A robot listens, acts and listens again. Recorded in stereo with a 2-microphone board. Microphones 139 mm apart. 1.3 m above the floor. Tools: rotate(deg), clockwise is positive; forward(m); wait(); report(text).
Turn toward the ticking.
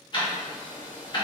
rotate(-35)
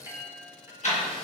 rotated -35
rotate(-110)
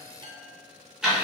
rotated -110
report("Facing the ticking.")